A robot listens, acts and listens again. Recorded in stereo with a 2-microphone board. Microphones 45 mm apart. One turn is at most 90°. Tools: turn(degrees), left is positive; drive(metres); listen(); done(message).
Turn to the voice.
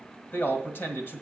turn(degrees=55)
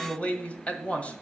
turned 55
turn(degrees=35)
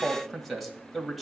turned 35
done("Found it: a man speaking, straight ahead.")